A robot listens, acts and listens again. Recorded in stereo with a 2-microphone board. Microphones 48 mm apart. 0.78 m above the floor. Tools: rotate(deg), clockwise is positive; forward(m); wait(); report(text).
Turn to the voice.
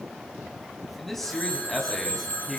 rotate(-30)
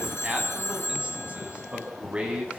rotate(25)
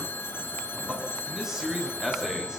rotate(10)
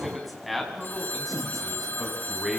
report("Facing the man speaking.")